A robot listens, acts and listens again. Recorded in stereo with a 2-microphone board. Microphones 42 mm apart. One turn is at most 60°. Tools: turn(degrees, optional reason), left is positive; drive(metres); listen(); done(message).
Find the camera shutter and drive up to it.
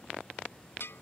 listen()
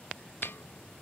listen()
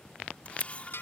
turn(degrees=35, reason="The camera shutter: about 35° left or 145° left.")
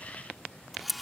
drive(metres=1.0)
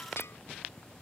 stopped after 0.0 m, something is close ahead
listen()
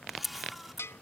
done("Something is in my way. I am facing the camera shutter but have not reached it.")